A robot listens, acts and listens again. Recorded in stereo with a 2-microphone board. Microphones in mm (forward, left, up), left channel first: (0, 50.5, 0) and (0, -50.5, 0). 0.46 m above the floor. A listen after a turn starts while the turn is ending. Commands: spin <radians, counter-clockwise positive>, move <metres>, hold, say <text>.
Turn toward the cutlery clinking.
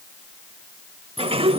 hold
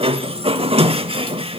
hold
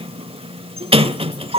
say I can't make out cutlery clinking to turn to.